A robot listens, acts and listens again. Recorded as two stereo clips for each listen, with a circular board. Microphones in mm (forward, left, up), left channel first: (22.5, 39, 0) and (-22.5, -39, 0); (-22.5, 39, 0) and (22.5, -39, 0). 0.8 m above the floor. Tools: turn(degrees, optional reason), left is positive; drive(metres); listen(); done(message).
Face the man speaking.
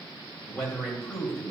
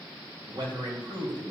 turn(degrees=-30, reason="The man speaking: 30° right.")
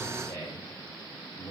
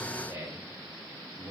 turn(degrees=-10, reason="The man speaking is now 10° right.")
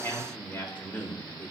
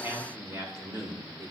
turn(degrees=-10, reason="The man speaking is now 10° right.")
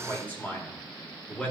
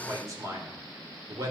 turn(degrees=-20, reason="The man speaking is now 20° right.")
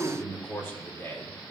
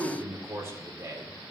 done("Found it: a man speaking, straight ahead, 1 to 2 m away.")